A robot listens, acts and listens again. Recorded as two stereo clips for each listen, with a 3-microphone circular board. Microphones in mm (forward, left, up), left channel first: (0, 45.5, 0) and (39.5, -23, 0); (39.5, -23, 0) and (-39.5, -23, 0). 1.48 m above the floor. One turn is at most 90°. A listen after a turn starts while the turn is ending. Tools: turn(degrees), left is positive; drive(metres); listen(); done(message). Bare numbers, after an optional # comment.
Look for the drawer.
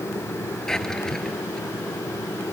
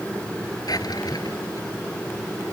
# The drawer: 35° left.
turn(35)
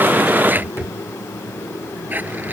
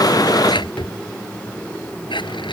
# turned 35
done("Found it: a drawer, straight ahead.")